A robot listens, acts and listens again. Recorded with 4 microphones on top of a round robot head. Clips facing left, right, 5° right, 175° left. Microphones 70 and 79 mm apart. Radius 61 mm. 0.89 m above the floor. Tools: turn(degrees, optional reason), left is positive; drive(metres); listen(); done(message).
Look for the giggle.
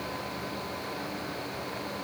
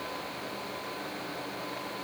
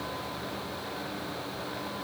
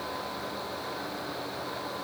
listen()
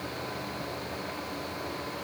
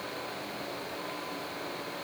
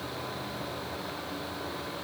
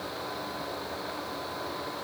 listen()
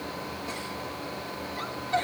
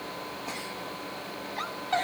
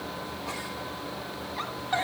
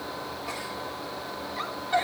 turn(degrees=-80, reason="The giggle: 80° right.")
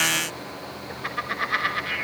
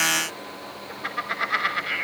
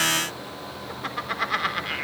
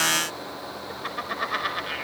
turn(degrees=-15, reason="The giggle is now 15° right.")
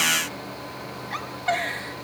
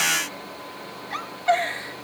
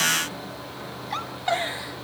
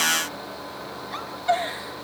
done("Found it: a giggle, straight ahead.")